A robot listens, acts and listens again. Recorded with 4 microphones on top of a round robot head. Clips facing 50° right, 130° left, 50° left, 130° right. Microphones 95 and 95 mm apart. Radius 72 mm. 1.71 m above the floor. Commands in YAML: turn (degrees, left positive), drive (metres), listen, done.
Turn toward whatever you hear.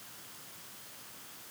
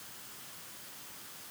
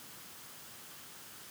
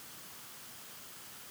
listen: true
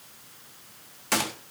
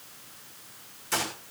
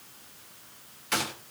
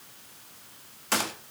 turn: -75
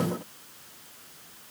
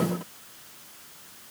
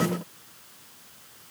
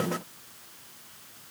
done: "Facing where the gunshot came from. I can't hear it now."